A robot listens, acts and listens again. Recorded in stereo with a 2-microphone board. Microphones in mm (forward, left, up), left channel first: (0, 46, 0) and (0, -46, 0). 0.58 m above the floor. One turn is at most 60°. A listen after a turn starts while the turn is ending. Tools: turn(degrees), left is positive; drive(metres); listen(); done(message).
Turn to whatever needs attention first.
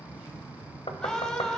turn(degrees=30)
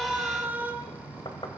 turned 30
turn(degrees=-20)
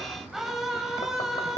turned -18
done("Facing the scream, 2 to 4 m away.")